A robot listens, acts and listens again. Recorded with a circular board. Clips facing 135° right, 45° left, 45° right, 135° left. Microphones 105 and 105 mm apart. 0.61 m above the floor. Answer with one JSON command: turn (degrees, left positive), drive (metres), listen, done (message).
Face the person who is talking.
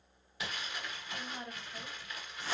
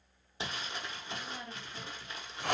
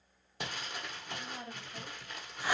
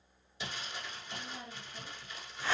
{"turn": -75}
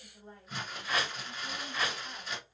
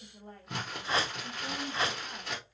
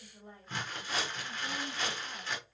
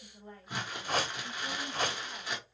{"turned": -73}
{"turn": 35}
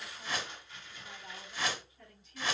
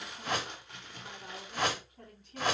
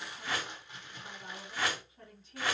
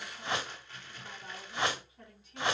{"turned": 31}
{"turn": 15}
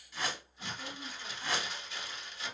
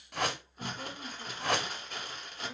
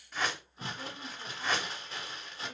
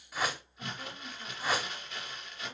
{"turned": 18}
{"listen": true}
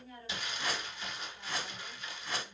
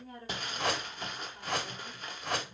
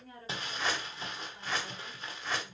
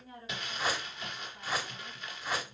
{"done": "Found it: a woman speaking, straight ahead."}